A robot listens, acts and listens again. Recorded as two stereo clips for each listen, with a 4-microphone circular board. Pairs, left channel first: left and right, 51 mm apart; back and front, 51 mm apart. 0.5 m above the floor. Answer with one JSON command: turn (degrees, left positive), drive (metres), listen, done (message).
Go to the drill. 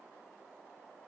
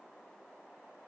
{"listen": true}
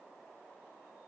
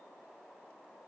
{"listen": true}
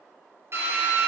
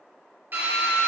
{"turn": -50}
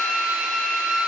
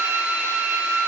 {"drive": 1.0}
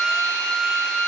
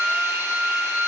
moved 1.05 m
{"turn": 10}
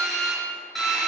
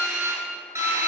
{"drive": 1.0}
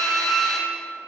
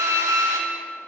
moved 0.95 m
{"drive": 1.0}
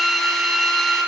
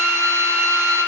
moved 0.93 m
{"drive": 1.0}
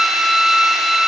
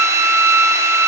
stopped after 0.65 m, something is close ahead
{"done": "Arrived at the drill, straight ahead."}